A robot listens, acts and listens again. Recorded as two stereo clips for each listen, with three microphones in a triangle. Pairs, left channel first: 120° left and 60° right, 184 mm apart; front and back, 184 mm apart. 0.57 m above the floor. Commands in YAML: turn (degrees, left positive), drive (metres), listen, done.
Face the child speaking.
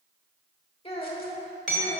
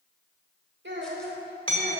turn: 165
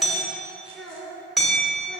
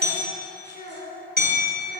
turn: 25
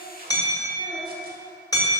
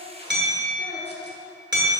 turn: -25
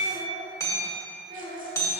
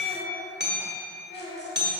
turn: -25
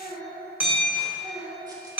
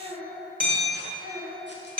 done: "Facing the child speaking."